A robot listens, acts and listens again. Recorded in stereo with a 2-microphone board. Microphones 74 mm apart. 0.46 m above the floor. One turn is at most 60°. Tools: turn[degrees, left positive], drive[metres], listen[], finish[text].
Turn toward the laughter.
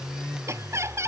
Thought: The laughter: about 40° right or 140° right.
Action: turn[-40]
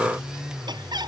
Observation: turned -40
Thought: So it is at 105° right.
Action: turn[-60]
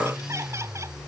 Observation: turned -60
Thought: Nothing new. It was at 45° right.
Action: turn[-45]
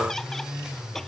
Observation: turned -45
Action: listen[]
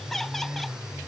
Action: finish[I heard laughter from this way, but can't make it out now.]